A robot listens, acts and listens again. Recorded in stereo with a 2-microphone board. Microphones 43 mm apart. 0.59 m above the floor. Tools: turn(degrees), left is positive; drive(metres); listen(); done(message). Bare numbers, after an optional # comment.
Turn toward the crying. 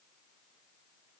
listen()
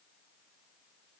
listen()
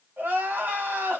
# The crying: about 60° right or 120° right.
turn(-60)
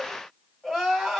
done("Found it: crying, straight ahead.")